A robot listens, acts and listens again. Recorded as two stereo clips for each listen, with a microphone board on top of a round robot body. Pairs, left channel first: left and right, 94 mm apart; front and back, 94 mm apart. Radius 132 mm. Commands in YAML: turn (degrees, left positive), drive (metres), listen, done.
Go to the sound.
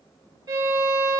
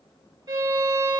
turn: -135
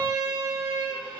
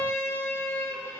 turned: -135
turn: -55
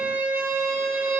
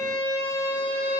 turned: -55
turn: -25
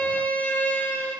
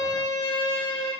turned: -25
turn: 20
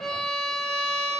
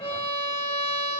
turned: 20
drive: 1.0
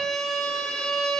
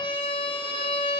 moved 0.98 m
drive: 1.0
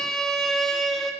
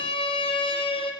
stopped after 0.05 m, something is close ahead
done: "I am next to the violin."